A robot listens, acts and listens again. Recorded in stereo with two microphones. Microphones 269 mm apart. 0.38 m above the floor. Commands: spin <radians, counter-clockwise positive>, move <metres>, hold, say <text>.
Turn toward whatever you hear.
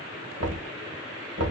spin -1.13
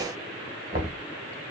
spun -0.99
spin -0.70
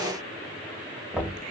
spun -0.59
say Facing the knocking.